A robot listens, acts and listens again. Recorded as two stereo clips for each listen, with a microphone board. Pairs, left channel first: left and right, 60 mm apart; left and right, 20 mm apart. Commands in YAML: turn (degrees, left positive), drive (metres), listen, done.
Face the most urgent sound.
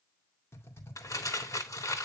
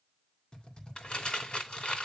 listen: true
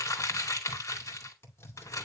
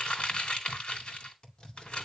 listen: true
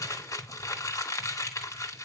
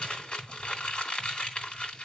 done: "I can't make out anything urgent, only typing on a keyboard and crumpling."